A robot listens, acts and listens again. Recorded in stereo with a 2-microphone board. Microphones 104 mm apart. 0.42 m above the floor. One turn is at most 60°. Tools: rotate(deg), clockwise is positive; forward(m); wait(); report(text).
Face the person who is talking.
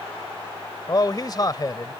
rotate(-40)
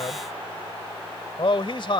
rotate(-60)
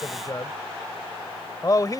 rotate(-45)
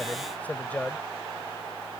rotate(-20)
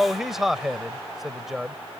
report("Found it: a man speaking, straight ahead.")